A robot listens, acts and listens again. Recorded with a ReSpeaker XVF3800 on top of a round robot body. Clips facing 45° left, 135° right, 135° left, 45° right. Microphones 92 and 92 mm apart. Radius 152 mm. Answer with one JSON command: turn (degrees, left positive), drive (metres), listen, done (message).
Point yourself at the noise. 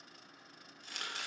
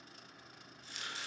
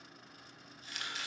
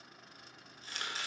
{"turn": 10}
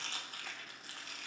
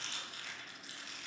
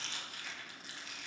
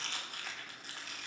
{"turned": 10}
{"done": "Found it: chopping, straight ahead, 1 to 2 m away."}